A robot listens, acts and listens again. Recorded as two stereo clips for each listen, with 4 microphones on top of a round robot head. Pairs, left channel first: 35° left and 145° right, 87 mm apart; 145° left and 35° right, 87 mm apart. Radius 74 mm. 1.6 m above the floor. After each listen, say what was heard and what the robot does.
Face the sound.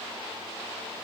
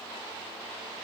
Keep listening.
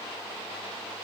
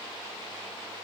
Keep listening.
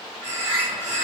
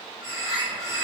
The bird: 65° right. Turn 65° right.
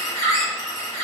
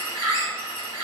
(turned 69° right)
Facing the bird, 1 to 2 m away.